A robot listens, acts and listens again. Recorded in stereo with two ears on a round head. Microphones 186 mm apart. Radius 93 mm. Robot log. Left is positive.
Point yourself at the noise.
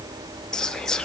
cmd yaw +30
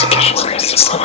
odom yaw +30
note: So it is at 145° left.
cmd yaw +145
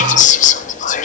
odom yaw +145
note: The whispering is now 45° left.
cmd yaw +45
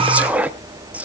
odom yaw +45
end: Facing the whispering.